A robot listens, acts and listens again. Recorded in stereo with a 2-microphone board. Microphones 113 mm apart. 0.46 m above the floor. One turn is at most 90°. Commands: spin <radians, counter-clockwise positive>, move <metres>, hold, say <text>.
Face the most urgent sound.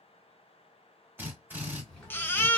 spin 0.35
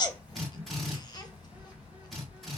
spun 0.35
spin 1.57
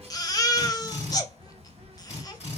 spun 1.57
spin 0.52
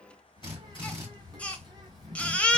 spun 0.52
spin 0.17
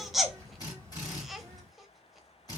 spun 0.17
say Facing the baby crying.